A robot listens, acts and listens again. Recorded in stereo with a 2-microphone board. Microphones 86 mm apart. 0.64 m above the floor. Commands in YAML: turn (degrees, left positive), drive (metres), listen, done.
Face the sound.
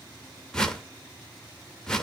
turn: 30
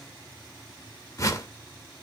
turn: 140
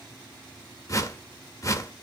turn: 40
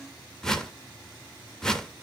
done: "Found it: a whoosh, straight ahead."